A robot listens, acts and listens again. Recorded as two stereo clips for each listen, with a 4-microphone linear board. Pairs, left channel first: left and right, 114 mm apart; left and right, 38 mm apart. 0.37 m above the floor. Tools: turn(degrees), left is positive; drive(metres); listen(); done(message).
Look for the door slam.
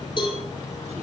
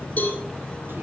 listen()
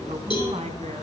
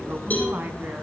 listen()
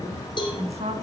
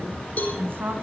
done("I can't make out a door slam, only a woman speaking and a cowbell.")